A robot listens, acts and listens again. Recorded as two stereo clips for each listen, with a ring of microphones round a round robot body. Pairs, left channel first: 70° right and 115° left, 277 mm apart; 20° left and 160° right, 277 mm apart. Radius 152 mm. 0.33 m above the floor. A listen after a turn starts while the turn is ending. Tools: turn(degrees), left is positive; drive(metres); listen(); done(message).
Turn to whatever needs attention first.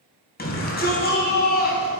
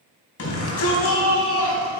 turn(degrees=-10)
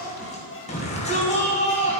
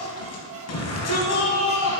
done("Facing the shout.")